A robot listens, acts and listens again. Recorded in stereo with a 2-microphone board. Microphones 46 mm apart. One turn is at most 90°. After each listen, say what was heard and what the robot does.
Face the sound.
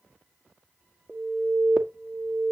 The alarm: about 20° right or 160° right. Turn 20° right.
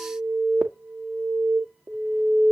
So it is at 135° right. Turn 90° right.
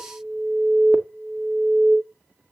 The alarm is now 45° right. Turn 45° right.
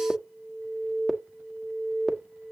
Facing the alarm.